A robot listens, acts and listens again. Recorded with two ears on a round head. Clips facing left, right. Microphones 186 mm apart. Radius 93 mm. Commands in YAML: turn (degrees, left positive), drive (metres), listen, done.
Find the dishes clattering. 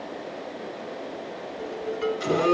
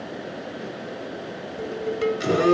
turn: -60
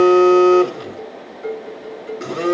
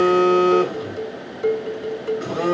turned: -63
turn: -55
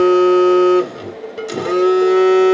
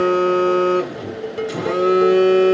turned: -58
done: "Facing the dishes clattering, 1 to 2 m away."